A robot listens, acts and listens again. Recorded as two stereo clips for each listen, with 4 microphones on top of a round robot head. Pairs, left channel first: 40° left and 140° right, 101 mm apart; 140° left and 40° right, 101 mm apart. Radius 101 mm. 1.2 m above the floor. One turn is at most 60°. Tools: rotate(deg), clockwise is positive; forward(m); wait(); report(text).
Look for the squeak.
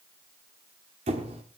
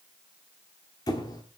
rotate(60)
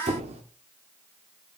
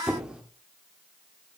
rotate(60)
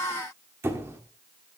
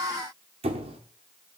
rotate(60)
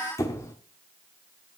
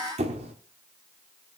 rotate(20)
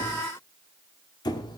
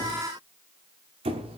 rotate(10)
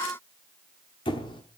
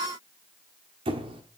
report("Facing the squeak.")